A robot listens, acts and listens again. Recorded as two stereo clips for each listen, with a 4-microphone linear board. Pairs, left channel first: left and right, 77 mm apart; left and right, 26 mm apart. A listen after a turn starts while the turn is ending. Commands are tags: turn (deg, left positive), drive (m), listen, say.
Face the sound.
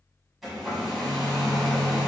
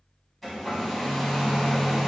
<turn deg="30"/>
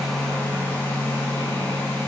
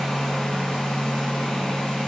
<turn deg="150"/>
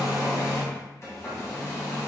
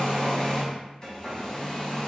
<turn deg="40"/>
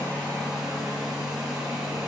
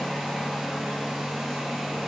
<say>Found it: a hair dryer, straight ahead, 1 to 2 m away.</say>